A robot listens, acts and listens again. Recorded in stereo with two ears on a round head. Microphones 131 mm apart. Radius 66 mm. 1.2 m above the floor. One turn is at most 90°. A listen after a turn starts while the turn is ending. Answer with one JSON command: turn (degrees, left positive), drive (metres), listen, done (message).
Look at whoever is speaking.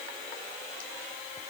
{"listen": true}
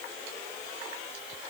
{"listen": true}
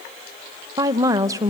{"turn": -20}
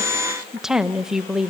{"done": "Found it: a woman speaking, straight ahead, under 1 m away."}